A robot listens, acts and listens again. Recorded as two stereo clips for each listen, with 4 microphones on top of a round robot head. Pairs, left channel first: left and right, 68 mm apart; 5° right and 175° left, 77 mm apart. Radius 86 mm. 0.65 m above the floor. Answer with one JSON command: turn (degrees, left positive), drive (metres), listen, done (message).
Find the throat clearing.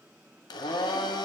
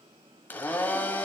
{"listen": true}
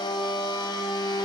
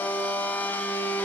{"listen": true}
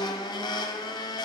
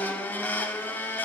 {"done": "I can't make out throat clearing, only a blender."}